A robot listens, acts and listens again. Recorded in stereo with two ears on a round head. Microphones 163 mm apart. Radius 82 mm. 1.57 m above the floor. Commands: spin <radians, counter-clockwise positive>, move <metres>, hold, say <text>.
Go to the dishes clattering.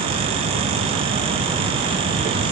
hold
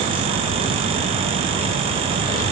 hold
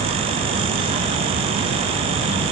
say I can't make out dishes clattering.